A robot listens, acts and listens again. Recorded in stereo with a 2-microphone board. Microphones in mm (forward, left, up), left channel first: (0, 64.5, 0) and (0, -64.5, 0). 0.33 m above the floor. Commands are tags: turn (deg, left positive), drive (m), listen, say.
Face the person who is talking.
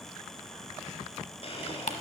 <listen/>
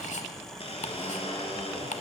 <listen/>
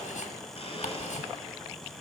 <say>I can't make out anyone speaking, only ticking and a blender.</say>